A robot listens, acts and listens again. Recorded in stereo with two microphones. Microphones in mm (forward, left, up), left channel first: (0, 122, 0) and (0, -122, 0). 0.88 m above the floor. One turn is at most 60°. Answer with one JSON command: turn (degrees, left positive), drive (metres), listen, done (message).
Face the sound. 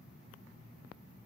{"listen": true}
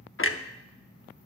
{"turn": 55}
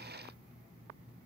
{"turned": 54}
{"listen": true}
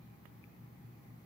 {"done": "I heard a clunk, but can't make it out now. It was about straight ahead or 75° left."}